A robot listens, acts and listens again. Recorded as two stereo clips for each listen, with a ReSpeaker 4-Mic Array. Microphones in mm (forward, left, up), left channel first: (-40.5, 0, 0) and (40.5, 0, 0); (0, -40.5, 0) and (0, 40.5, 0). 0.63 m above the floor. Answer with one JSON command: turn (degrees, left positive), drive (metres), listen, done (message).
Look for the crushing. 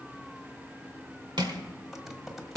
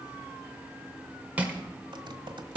{"turn": 20}
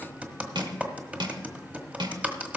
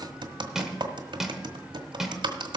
{"done": "Facing the crushing, 1 to 2 m away."}